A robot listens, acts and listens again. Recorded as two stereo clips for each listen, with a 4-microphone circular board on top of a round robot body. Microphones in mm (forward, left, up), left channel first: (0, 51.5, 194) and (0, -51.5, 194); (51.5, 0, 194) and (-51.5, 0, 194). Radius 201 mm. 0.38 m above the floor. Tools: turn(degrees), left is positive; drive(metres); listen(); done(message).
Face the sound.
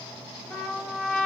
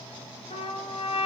done("Facing the trumpet, 1 to 2 m away.")